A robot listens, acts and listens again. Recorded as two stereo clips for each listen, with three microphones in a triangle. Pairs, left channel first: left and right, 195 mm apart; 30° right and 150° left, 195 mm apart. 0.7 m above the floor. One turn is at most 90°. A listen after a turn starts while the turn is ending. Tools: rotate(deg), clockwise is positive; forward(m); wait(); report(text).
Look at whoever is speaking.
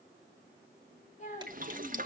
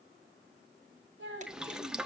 rotate(-90)
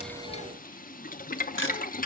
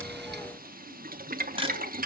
rotate(-50)
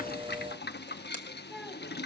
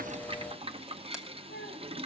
report("Facing the child speaking.")